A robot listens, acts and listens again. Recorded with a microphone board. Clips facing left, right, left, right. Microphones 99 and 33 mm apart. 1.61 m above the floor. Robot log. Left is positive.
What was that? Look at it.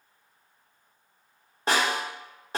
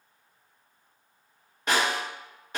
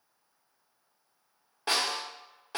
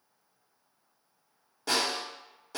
note: The snare drum: about 35° left or 145° left.
cmd yaw +35
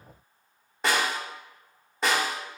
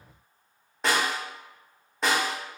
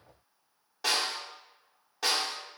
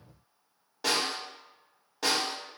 end: Facing the snare drum.